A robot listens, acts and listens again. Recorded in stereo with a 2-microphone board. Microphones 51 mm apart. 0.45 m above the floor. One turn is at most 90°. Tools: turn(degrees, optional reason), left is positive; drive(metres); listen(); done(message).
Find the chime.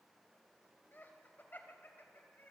listen()
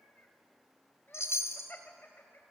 turn(degrees=65, reason="The chime: about 65° left or 115° left.")
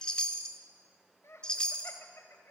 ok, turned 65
turn(degrees=20, reason="So it is at 20° left.")
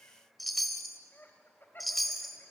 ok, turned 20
done("Facing the chime.")